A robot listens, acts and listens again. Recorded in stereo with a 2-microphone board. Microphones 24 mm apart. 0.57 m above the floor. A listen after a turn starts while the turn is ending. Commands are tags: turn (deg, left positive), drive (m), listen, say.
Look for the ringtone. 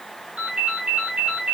<turn deg="-90"/>
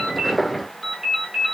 <turn deg="-10"/>
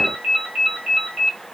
<say>Found it: a ringtone, straight ahead.</say>